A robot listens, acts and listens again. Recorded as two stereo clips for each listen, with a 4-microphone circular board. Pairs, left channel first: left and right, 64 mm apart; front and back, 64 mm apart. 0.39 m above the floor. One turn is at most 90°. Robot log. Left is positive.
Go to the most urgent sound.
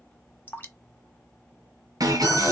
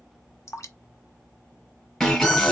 note: The alarm: 90° right.
cmd yaw -90
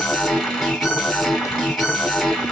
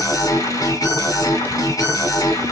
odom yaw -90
cmd fwd 1.0
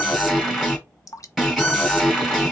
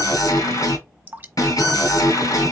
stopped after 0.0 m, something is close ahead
end: Something is in my way. I am facing the alarm but have not reached it.